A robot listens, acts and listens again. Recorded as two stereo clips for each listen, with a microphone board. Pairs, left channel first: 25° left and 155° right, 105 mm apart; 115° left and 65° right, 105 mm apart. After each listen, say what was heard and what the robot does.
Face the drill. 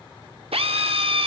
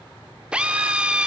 The drill: 145° right. Turn 145° right.
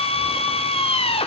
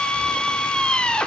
The drill is now 35° left. Turn 35° left.
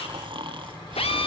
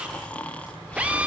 The drill is now 10° left. Turn 10° left.
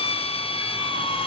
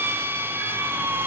Facing the drill.